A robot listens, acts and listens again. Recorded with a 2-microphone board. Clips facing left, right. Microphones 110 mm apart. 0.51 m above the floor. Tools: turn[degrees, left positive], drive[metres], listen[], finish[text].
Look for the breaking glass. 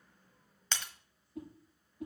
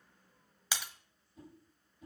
Action: turn[-30]
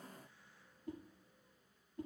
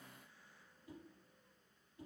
Action: listen[]
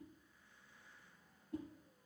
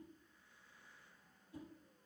Action: finish[I heard breaking glass, but can't make it out now. It was about 20° left or 140° right.]